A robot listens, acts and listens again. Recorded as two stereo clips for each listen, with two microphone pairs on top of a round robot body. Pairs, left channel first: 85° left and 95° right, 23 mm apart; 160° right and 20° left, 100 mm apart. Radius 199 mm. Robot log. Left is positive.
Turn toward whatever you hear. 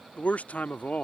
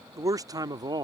note: The man speaking: 75° left.
cmd yaw +75
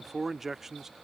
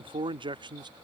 note: The man speaking is now 20° right.
cmd yaw -20
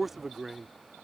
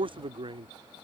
note: The man speaking is now 20° right.
cmd yaw -20
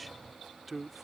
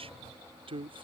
note: The man speaking is now 15° right.
cmd yaw -15
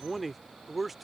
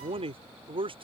note: The man speaking is now 15° right.
cmd yaw -15
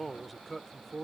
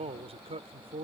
end: Facing the man speaking.